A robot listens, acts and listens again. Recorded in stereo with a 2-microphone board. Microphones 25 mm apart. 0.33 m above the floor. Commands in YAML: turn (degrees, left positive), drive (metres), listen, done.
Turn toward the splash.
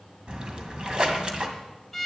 turn: -40
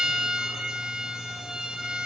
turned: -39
listen: true
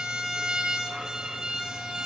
done: "I heard a splash, but can't make it out now. It was about straight ahead or 100° right."